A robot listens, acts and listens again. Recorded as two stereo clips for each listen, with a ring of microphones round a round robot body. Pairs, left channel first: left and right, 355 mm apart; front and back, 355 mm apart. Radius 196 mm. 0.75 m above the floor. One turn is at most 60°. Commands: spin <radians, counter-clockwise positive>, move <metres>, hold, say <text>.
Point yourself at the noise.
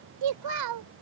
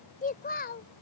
spin -1.05
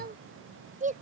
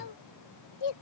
spin -0.35
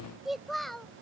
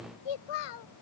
say Found it: a child speaking, straight ahead.